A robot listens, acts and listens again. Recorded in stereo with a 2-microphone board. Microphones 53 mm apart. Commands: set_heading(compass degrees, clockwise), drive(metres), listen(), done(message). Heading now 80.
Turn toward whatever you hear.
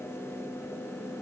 listen()
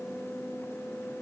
listen()
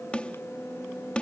set_heading(60)
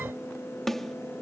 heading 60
done("Found it: a snare drum, straight ahead.")